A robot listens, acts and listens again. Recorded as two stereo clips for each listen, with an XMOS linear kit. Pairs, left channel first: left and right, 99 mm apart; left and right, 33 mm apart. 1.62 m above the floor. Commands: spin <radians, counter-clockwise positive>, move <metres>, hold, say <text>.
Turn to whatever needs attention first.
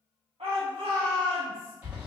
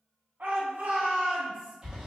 spin -1.57
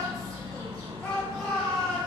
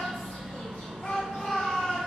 spin 0.17
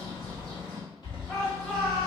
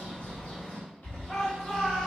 say Found it: a shout, straight ahead.